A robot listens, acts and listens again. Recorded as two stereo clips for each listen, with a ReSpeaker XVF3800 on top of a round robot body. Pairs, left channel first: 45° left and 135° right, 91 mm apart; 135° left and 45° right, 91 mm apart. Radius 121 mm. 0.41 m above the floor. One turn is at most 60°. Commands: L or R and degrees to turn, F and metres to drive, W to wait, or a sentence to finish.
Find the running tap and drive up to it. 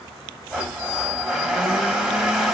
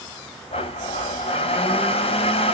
W
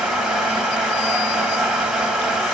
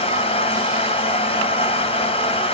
W
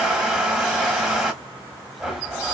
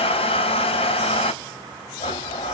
I can't make out a running tap, only a blender.